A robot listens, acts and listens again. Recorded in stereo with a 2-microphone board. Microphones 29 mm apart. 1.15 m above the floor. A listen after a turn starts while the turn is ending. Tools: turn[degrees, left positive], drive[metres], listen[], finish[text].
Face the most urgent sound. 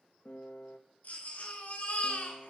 Thought: The baby crying: about 55° left or 125° left.
Action: turn[55]
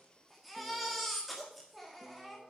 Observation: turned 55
Action: finish[Facing the baby crying, 2 to 4 m away.]